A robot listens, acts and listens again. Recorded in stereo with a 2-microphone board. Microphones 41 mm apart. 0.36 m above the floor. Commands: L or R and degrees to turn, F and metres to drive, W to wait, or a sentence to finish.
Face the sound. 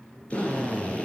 L30
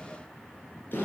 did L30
L120
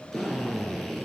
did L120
L10
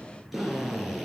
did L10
Facing the drill.